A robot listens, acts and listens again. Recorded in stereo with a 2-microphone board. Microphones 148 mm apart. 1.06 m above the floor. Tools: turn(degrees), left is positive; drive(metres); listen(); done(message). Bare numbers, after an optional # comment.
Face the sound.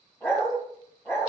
# The dog barking: about 15° left or 165° left.
turn(15)
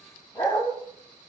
# So it is at 150° left.
turn(150)
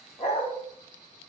# The dog barking is now 55° left.
turn(55)
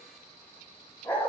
# The dog barking is now 15° left.
turn(15)
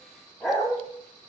done("Facing the dog barking.")